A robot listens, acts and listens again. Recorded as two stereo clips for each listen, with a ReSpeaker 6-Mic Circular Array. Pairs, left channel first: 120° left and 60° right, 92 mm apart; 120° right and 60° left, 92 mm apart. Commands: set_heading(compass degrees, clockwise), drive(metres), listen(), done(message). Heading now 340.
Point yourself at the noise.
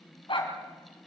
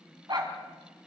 set_heading(245)
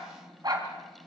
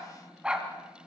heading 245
set_heading(265)
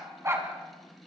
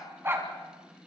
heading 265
done("Facing the dog barking.")